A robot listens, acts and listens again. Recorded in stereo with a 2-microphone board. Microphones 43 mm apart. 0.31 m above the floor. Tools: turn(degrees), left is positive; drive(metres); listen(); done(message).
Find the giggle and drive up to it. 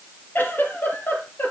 turn(degrees=45)
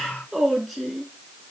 drive(metres=1.0)
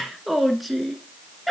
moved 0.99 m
drive(metres=1.0)
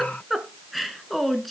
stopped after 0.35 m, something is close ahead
done("I am next to the giggle.")